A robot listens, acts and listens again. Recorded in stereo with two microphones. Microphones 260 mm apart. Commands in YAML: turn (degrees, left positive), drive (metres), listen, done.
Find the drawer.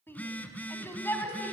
listen: true
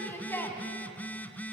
listen: true
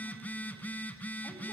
done: "I can't make out a drawer to turn to."